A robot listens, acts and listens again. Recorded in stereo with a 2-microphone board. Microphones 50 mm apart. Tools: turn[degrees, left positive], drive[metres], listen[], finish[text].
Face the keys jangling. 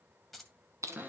Action: turn[30]
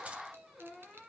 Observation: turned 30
Action: listen[]
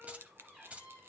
Thought: So it is at 30° right.
Action: turn[-30]
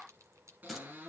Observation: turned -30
Action: listen[]
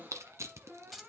Action: finish[Facing the keys jangling, 1 to 2 m away.]